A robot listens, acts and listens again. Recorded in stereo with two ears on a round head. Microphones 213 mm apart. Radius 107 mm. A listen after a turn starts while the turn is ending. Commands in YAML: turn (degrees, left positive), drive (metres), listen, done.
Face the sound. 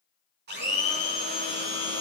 turn: -45
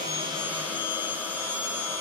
turn: -10
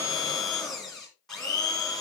done: "Found it: a blender, straight ahead, 2 to 4 m away."